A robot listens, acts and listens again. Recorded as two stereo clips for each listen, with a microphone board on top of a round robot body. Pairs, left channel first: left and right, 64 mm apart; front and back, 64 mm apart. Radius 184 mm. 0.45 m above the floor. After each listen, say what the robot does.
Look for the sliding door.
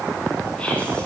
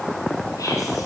Keep listening.
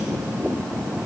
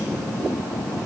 Keep listening.
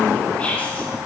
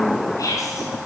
I can't make out a sliding door to turn to.